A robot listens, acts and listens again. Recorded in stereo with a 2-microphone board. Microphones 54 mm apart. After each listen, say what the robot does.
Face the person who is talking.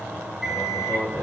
Turn 45° left.
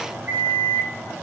Keep listening.
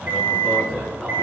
Facing the man speaking, over 4 m away.